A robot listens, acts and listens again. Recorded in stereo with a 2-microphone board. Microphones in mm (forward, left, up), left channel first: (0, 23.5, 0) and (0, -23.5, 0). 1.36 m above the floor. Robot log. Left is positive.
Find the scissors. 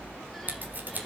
note: The scissors: about 40° right or 140° right.
cmd yaw -40
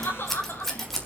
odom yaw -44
end: Facing the scissors, 2 to 4 m away.